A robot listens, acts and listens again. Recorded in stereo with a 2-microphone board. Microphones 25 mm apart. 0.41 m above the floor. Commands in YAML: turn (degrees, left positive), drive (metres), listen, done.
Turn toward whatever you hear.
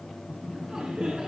turn: -25
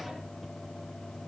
listen: true
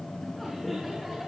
done: "Found it: laughter, straight ahead."